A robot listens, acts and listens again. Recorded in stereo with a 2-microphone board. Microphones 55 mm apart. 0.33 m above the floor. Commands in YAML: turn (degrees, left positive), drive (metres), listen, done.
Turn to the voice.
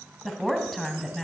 turn: 30
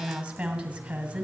turn: -20
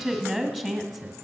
done: "Found it: a woman speaking, straight ahead, 1 to 2 m away."